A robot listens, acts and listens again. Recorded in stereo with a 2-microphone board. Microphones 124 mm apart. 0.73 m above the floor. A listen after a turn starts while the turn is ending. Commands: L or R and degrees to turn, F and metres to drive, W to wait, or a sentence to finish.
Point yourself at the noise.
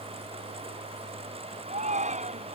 R90
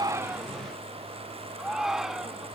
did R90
Facing the shout.